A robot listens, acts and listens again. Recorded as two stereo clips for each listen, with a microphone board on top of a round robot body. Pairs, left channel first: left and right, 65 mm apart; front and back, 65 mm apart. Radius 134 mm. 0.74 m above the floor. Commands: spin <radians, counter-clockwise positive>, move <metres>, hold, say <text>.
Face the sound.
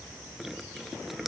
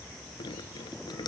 say Facing the dripping.